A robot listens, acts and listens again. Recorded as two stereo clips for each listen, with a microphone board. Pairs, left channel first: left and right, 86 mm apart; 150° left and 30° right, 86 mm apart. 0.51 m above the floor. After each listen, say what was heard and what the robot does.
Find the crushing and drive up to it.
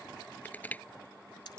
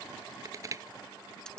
The crushing: 20° left. Turn 20° left.
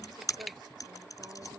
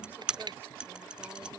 Drive 1.0 m forward.
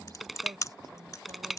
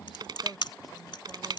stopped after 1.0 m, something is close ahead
Arrived at the crushing, straight ahead.